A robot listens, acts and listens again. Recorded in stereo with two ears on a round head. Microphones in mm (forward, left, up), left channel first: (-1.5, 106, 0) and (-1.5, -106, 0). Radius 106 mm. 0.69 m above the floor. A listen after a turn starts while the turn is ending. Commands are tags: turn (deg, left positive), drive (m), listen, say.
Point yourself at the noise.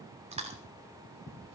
<turn deg="-25"/>
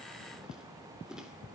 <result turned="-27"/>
<listen/>
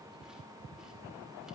<listen/>
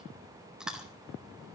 <say>Found it: chewing, straight ahead, 2 to 4 m away.</say>